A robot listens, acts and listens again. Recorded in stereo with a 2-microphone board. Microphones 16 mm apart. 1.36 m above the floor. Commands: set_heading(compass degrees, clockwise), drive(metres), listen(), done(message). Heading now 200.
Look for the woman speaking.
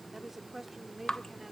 set_heading(220)
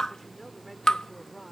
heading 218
set_heading(188)
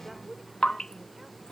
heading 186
listen()
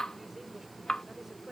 listen()
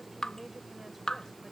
done("I heard a woman speaking, but can't make it out now. It was about 30° right or 150° left.")